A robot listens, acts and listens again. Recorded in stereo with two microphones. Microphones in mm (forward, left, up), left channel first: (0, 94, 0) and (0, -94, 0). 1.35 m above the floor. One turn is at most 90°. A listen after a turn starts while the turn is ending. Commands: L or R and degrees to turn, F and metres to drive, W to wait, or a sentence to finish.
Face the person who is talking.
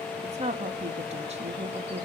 R35
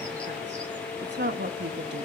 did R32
R90
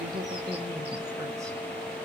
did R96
R15
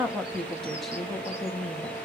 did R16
Facing the woman speaking, 2 to 4 m away.